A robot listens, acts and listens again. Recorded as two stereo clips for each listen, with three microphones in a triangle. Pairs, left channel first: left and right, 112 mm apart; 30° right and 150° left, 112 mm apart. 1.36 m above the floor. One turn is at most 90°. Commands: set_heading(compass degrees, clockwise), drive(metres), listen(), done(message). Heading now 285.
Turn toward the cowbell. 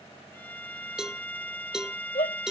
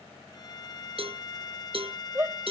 set_heading(15)
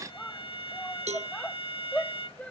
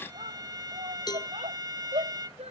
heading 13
set_heading(98)
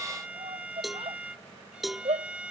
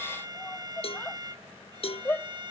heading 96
done("Facing the cowbell.")